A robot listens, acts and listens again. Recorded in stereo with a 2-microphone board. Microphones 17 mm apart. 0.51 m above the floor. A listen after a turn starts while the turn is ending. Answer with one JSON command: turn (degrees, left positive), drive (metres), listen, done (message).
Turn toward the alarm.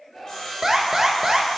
{"turn": -20}
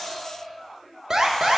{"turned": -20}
{"turn": -135}
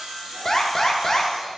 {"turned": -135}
{"turn": 25}
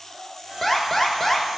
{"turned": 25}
{"turn": 10}
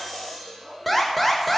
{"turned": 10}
{"done": "Facing the alarm, 1 to 2 m away."}